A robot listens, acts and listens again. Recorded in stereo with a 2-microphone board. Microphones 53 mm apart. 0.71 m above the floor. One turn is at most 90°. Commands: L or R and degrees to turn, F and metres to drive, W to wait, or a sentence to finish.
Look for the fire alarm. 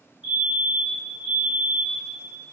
R30
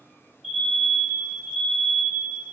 Found it: a fire alarm, straight ahead.